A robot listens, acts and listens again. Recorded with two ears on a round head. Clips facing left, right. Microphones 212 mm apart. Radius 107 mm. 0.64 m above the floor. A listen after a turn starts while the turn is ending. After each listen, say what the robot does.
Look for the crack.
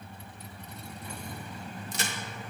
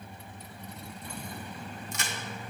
Turn 30° left.
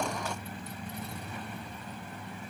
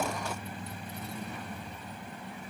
Keep listening.
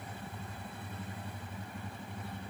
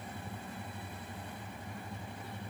I heard a crack, but can't make it out now. It was about straight ahead or 120° left.